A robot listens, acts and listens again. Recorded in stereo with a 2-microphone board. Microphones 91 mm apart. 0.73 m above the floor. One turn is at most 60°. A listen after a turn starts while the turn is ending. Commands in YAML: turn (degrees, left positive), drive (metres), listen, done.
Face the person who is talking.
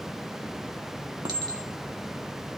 listen: true
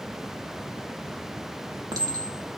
listen: true
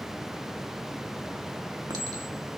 done: "I can't make out anyone speaking to turn to."